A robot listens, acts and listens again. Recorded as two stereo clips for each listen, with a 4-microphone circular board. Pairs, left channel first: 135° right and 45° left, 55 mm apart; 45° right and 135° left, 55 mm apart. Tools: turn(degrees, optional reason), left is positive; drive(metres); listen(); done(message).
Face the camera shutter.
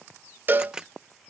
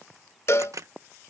turn(degrees=120, reason="The camera shutter: 120° left.")
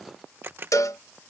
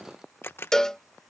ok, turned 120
done("Facing the camera shutter.")